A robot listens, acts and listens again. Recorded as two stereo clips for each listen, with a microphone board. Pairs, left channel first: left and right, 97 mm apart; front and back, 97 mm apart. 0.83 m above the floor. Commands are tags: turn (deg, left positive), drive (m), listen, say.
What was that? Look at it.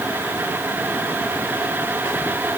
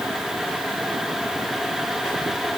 <listen/>
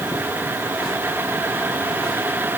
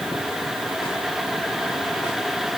<listen/>
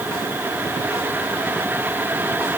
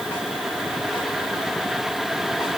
<say>I can't make out anything to turn to.</say>